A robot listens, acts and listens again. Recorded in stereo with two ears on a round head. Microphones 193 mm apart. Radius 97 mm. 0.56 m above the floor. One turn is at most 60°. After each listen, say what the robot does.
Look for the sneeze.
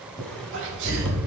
Turn 60° right.
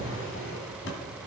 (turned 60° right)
Keep listening.
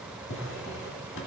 I heard a sneeze, but can't make it out now. It was about 5° right or 55° right.